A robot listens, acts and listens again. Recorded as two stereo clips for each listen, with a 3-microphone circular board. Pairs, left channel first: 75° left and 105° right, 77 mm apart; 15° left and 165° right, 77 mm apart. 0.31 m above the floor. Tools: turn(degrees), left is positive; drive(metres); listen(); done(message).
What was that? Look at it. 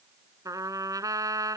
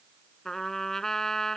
turn(degrees=-70)
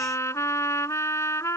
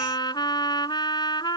turn(degrees=25)
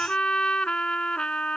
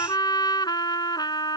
done("Facing the trumpet.")